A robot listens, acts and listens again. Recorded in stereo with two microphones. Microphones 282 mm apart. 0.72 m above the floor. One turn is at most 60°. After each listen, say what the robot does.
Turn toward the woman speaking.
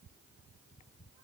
Keep listening.
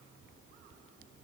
Keep listening.
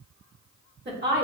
Turn 35° right.
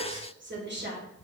Turn 35° right.
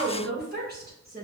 Turn 30° right.
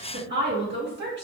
Turn 40° right.
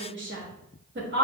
Turn 40° right.
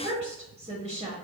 Turn 20° right.
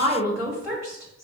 Turn 10° right.
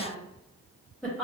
Facing the woman speaking, 1 to 2 m away.